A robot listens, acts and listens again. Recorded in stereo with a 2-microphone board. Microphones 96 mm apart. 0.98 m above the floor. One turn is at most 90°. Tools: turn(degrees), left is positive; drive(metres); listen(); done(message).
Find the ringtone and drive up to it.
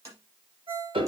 turn(degrees=-70)
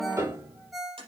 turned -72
drive(metres=1.0)
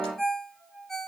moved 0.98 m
drive(metres=1.0)
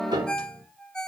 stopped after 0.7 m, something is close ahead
turn(degrees=10)
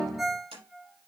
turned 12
done("Arrived at the ringtone, straight ahead.")